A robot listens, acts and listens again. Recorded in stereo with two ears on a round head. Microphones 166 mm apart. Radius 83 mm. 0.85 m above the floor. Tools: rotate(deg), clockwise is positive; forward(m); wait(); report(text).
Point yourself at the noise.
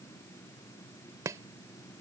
rotate(20)
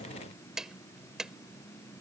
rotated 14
report("Facing the chopping.")